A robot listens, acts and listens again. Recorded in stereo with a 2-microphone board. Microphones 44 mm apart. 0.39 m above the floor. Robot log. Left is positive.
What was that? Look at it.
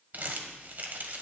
note: The crumpling: about 45° right or 135° right.
cmd yaw -45
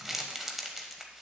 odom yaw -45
end: Facing the crumpling.